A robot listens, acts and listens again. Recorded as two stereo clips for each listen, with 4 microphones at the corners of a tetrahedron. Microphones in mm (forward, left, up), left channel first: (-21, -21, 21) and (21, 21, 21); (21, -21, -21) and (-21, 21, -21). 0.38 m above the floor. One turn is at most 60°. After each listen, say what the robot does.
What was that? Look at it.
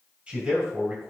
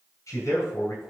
Turn 20° right.
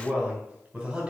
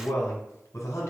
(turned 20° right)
Turn 15° right.
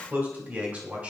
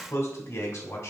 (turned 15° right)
Turn 10° right.
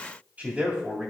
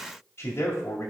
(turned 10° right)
Turn 20° right.
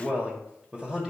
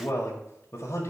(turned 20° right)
Turn 35° right.
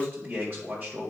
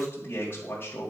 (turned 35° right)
Turn 10° right.
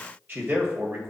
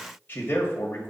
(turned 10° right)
Facing the man speaking, 1 to 2 m away.